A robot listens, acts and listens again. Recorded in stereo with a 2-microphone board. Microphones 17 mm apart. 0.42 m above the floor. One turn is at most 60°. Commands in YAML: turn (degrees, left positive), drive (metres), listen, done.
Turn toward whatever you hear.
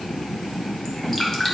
turn: 25
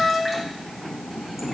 listen: true
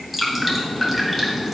done: "Found it: dripping, straight ahead."